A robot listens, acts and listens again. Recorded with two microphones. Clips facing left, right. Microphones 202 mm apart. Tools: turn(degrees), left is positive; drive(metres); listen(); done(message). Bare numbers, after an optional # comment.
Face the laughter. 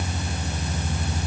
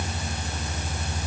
listen()
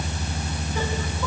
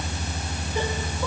listen()
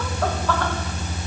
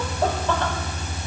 done("I can't make out laughter to turn to.")